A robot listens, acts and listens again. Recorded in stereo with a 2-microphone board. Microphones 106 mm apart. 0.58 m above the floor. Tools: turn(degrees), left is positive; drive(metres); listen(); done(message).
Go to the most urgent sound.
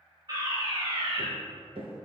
turn(degrees=-40)
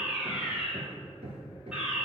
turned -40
turn(degrees=-10)
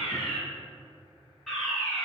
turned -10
drive(metres=1.0)
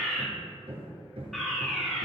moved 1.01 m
drive(metres=1.0)
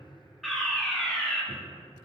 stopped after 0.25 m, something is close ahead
done("I am next to the fire alarm.")